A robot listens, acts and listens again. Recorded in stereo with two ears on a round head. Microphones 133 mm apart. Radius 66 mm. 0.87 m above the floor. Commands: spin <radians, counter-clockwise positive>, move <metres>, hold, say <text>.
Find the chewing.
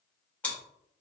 spin 0.52
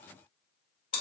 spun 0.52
spin 2.36
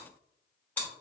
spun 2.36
spin 0.26
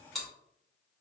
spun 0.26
say Facing the chewing, 1 to 2 m away.